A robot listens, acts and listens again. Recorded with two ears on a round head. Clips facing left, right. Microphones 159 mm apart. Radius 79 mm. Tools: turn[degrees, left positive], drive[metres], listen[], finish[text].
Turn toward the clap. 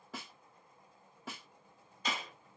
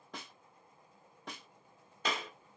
Thought: The clap: about 50° right or 130° right.
Action: turn[-50]
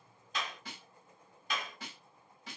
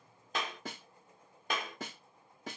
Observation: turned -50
Thought: So it is at 60° right.
Action: turn[-60]
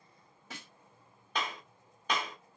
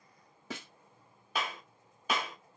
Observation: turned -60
Action: finish[Facing the clap.]